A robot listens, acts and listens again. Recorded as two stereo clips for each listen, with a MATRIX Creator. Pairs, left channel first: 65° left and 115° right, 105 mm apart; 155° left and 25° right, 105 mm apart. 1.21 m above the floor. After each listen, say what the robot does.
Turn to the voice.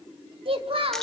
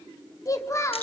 Turn 140° right.
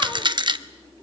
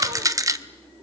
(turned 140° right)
Keep listening.
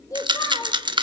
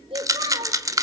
Turn 10° left.
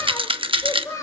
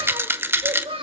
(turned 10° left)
Found it: a child speaking, straight ahead.